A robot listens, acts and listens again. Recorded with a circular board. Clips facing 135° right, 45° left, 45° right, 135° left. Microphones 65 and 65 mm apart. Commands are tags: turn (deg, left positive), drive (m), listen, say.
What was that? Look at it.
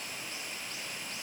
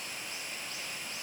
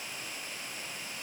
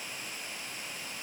<listen/>
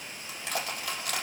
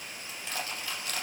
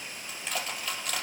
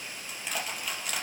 <turn deg="-140"/>
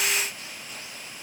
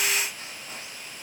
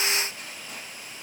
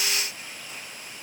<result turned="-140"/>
<listen/>
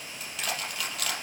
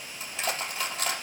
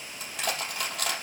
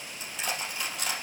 <turn deg="-15"/>
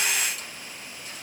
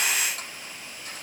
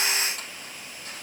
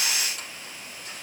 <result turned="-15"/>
<listen/>
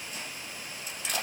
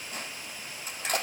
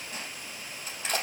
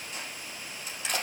<say>Facing the crushing, over 4 m away.</say>